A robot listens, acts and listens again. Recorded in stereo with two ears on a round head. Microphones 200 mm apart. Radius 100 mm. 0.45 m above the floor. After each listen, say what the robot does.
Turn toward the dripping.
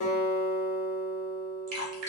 Turn 70° right.
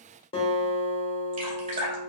Turn 40° right.
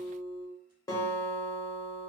Keep listening.
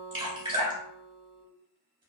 Turn 25° right.
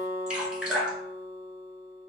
Found it: dripping, straight ahead, 1 to 2 m away.